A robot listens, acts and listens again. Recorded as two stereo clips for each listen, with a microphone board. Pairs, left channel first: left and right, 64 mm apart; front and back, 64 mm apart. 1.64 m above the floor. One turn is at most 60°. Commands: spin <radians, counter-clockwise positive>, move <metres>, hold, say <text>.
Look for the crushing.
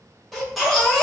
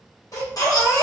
hold
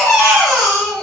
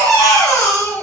hold
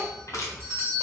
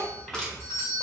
spin 1.05
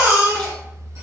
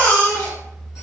spin 0.26
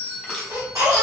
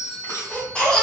hold
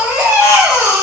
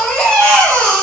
say Facing where the crushing came from. I can't hear it now.